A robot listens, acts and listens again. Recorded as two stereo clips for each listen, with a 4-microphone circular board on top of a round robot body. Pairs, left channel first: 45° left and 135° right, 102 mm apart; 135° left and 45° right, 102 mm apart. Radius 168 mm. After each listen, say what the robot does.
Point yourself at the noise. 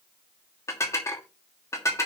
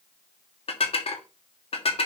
Turn 110° left.
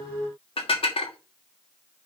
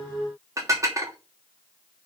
Turn 15° left.
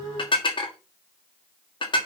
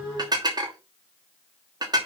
Found it: dishes clattering, straight ahead, 2 to 4 m away.